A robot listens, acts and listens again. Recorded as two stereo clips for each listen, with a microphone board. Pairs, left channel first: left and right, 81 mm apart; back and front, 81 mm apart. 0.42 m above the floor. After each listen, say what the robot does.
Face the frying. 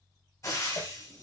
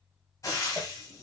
Turn 135° left.
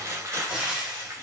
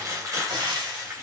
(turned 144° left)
Turn 10° right.
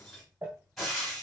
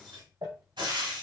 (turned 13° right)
Found it: frying, straight ahead, 2 to 4 m away.